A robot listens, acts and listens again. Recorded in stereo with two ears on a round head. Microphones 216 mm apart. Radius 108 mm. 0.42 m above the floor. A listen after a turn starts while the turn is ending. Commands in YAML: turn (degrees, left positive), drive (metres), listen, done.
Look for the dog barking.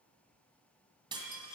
listen: true
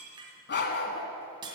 turn: 40
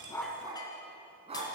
turn: -25
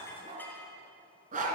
turn: -35
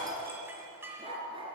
turn: -20
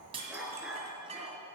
done: "Facing the dog barking."